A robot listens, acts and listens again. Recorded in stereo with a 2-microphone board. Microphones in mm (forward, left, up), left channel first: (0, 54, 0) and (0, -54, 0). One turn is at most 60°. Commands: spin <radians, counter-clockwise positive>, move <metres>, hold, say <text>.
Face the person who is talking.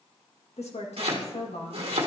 spin 1.05
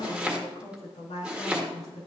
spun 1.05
spin 1.05
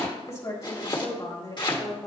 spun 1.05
spin 0.61
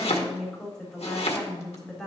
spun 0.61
say Facing the woman speaking.